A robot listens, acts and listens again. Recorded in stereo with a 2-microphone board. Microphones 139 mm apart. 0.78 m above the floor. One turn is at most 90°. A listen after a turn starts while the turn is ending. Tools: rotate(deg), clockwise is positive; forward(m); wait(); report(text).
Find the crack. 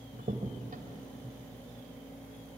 rotate(75)
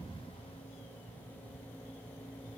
wait()
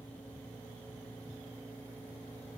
report("I heard a crack, but can't make it out now. It was about straight ahead or 30° right.")